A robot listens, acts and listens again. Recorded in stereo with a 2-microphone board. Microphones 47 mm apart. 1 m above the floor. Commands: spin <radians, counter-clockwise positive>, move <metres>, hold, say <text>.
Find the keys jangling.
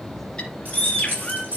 spin -0.61
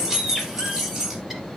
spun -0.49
say Found it: keys jangling, straight ahead, over 4 m away.